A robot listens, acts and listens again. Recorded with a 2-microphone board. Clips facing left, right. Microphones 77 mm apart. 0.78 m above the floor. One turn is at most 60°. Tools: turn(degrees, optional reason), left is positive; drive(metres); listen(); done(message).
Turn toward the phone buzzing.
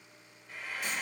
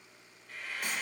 listen()
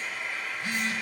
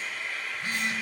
turn(degrees=-60, reason="The phone buzzing: about 60° right or 120° right.")
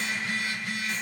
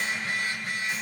turn(degrees=-55, reason="So it is at 55° right.")
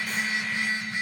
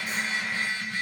turn(degrees=25, reason="The phone buzzing is now 25° left.")
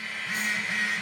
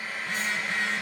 turn(degrees=10, reason="The phone buzzing is now 10° left.")
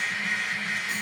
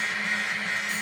done("Facing the phone buzzing.")